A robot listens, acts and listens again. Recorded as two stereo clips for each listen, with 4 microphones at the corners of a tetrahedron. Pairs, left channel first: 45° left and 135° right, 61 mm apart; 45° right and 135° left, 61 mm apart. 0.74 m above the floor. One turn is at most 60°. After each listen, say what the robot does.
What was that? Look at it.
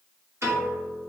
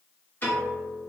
Turn 60° right.
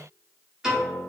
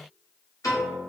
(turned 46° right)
Turn 55° right.
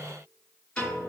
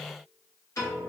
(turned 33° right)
Turn 25° right.
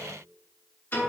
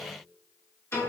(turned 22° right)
Found it: a piano, straight ahead, 1 to 2 m away.